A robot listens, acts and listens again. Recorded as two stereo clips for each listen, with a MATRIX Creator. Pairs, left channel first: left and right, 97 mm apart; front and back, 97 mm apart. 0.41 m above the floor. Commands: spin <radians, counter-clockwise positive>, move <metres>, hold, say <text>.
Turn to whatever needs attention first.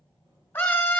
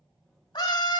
spin 0.44
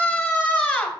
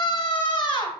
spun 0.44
spin 0.17
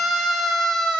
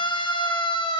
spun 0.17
say Found it: a scream, straight ahead.